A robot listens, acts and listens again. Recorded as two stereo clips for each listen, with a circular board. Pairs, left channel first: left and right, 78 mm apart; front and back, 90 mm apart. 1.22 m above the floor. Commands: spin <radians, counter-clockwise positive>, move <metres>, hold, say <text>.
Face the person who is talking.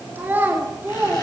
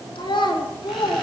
spin -0.44
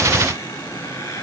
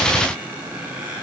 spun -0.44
hold
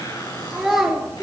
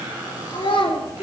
say Facing the child speaking, 2 to 4 m away.